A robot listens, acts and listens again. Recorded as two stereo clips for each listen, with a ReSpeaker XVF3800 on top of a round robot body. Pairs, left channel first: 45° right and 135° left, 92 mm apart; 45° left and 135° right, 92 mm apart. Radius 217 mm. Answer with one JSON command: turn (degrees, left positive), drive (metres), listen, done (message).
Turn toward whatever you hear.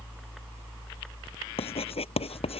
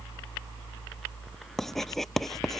{"turn": -40}
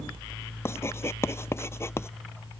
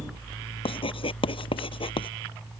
{"turn": 20}
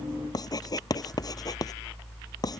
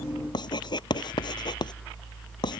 {"done": "Facing the writing."}